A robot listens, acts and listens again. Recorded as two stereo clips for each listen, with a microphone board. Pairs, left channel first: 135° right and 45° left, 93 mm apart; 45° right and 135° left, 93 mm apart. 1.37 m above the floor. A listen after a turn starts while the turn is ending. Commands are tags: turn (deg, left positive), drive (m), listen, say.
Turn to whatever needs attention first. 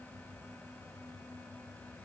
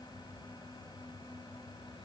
<listen/>
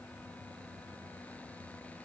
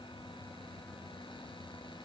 <listen/>
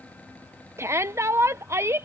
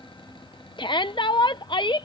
<turn deg="-15"/>
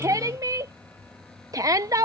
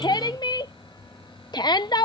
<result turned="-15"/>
<say>Facing the shout.</say>